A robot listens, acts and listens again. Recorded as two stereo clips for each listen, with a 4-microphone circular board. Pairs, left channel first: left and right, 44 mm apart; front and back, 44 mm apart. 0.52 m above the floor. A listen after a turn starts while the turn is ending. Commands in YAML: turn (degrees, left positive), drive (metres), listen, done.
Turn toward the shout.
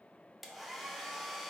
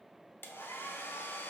listen: true
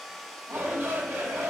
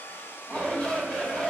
turn: -60
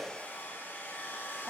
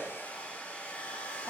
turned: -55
done: "Found it: a shout, straight ahead."